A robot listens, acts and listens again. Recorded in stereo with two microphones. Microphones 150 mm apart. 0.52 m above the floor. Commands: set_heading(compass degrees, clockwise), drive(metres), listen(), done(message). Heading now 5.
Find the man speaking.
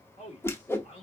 set_heading(315)
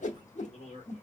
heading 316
set_heading(246)
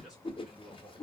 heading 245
done("Facing the man speaking, 1 to 2 m away.")